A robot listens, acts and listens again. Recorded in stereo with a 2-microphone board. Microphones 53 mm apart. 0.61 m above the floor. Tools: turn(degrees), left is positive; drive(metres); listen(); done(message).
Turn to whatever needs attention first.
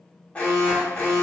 turn(degrees=20)
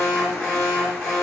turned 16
done("Found it: an alarm, straight ahead.")